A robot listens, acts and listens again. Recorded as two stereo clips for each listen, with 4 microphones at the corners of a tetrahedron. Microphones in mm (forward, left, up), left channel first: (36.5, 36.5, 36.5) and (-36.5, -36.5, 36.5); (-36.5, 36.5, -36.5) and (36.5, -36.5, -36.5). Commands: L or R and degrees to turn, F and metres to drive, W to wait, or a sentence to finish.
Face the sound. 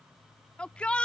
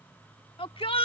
L125
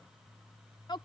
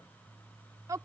Facing the shout.